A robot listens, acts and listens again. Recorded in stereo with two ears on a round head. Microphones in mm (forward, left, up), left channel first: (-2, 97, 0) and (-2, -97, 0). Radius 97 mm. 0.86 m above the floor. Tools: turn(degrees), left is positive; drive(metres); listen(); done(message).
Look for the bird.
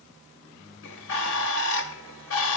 turn(degrees=65)
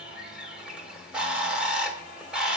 done("Found it: a bird, straight ahead.")